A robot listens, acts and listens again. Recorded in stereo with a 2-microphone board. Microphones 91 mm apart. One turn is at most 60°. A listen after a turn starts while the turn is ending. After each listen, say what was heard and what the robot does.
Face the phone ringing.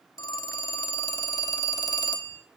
The phone ringing: about 40° left or 140° left. Turn 40° left.
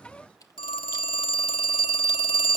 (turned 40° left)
So it is at 90° left. Turn 60° left.
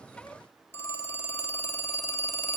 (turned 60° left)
The phone ringing is now 30° left. Turn 30° left.
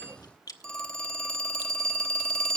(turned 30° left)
The phone ringing is now 10° left. Turn 10° left.
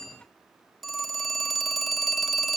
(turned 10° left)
Facing the phone ringing, 1 to 2 m away.